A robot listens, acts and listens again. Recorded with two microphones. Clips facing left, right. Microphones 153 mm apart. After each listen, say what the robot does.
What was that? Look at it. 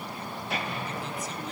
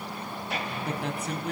Turn 65° right.
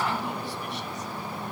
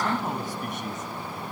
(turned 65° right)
Turn 50° right.
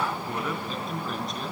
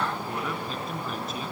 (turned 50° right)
Facing the man speaking, 2 to 4 m away.